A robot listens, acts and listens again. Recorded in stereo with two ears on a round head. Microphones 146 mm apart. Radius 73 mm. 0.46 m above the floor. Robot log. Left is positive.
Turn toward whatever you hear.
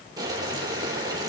note: The boiling: about 25° right or 155° right.
cmd yaw -25
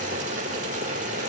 note: So it is at 130° right.
cmd yaw -130
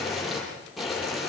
end: Found it: boiling, straight ahead.